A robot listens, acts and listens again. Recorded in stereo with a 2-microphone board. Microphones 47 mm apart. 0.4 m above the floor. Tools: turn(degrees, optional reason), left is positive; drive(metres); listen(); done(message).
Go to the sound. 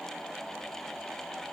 listen()
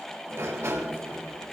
turn(degrees=-70, reason="The sliding door: about 70° right or 110° right.")
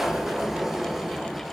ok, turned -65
drive(metres=1.0)
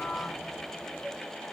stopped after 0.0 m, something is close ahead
done("Something is in my way. I am facing the sliding door but have not reached it.")